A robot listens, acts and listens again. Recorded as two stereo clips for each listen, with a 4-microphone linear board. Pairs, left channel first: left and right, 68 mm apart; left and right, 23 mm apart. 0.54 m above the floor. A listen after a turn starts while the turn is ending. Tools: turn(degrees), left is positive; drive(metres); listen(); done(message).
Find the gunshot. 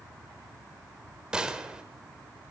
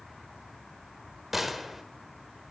turn(degrees=-30)
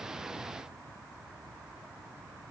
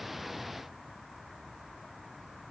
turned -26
listen()
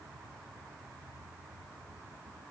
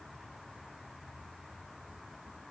done("I heard a gunshot, but can't make it out now. It was about 15° left or 140° right.")